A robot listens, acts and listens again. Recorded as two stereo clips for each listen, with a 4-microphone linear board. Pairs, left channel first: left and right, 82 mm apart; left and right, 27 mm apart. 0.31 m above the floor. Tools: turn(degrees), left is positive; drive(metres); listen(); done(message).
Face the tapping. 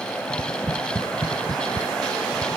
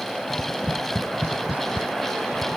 turn(degrees=-60)
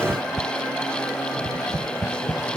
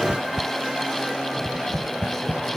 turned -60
turn(degrees=-65)
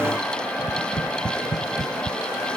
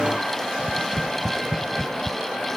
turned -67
done("Facing the tapping.")